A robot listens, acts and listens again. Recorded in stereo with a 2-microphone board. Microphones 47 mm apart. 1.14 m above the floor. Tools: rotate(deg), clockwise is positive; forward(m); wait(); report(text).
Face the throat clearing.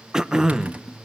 rotate(30)
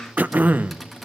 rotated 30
rotate(135)
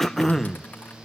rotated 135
rotate(-10)
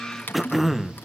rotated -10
report("Facing the throat clearing, under 1 m away.")